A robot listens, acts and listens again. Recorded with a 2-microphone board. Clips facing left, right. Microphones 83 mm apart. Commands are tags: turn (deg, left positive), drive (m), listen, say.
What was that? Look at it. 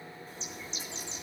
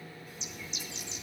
<turn deg="35"/>
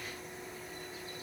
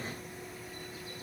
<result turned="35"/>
<listen/>
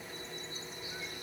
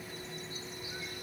<say>Found it: a bird, straight ahead, 1 to 2 m away.</say>